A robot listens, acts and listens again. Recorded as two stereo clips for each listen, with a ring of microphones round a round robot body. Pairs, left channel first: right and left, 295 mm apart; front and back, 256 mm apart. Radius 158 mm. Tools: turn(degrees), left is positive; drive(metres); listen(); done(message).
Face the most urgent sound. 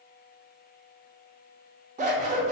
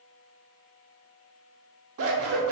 listen()
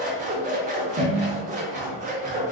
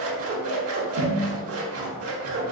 listen()
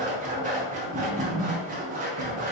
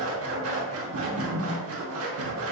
done("I can't make out anything urgent, only scissors.")